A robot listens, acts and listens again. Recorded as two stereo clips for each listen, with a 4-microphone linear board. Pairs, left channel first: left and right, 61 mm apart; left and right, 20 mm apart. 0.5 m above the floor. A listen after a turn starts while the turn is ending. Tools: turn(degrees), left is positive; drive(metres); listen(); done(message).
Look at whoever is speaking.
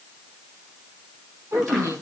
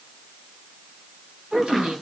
turn(degrees=-65)
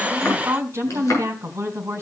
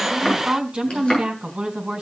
turn(degrees=-45)
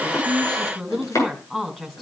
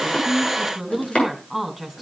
done("Facing the woman speaking, over 4 m away.")